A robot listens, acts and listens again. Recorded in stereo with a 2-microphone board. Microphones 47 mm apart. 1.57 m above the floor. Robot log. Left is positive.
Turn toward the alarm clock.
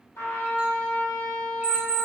note: The alarm clock: about 40° left or 140° left.
cmd yaw +40
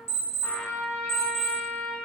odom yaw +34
note: So it is at 95° left.
cmd yaw +95
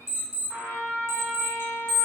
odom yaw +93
end: Found it: an alarm clock, straight ahead.